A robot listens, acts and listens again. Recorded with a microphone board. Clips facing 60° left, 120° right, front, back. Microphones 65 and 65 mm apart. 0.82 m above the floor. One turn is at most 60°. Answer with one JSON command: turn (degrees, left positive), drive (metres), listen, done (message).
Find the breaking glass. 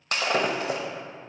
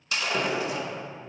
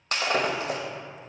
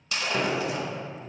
{"turn": 30}
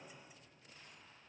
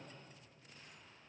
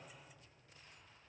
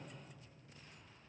{"done": "Facing where the breaking glass came from. I can't hear it now."}